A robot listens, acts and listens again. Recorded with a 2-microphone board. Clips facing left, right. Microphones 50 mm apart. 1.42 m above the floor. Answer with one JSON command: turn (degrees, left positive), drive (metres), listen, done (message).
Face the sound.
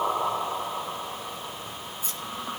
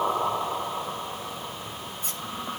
{"turn": -60}
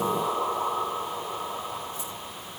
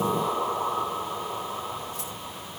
{"listen": true}
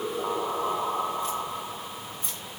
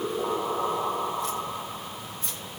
{"turn": -75}
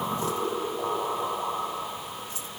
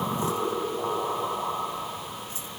{"listen": true}
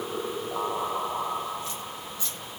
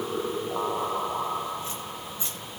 {"turn": -25}
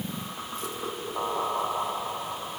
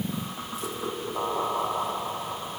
{"listen": true}
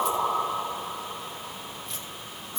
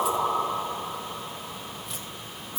{"done": "Facing the keys jangling, over 4 m away."}